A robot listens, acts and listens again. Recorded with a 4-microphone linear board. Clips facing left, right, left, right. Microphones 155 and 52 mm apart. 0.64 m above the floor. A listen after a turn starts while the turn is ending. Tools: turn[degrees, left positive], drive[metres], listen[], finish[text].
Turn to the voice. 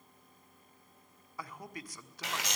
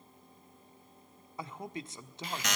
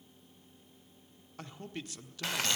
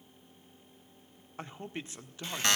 Thought: The man speaking: about 25° right or 155° right.
Action: turn[-25]
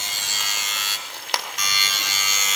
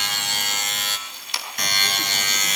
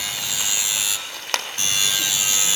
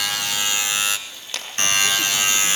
Action: listen[]
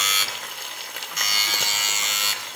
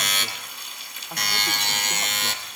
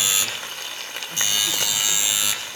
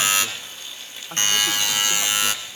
Action: listen[]
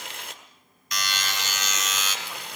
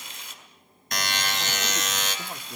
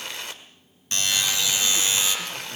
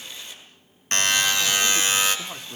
Action: finish[I heard a man speaking, but can't make it out now. It was about straight ahead or 130° right.]